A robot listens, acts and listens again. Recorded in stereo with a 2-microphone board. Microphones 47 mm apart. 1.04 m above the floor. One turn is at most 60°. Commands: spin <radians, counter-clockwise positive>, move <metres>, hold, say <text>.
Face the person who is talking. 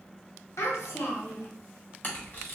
spin 1.05
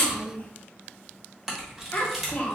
spin 0.61
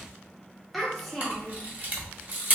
say Facing the child speaking, under 1 m away.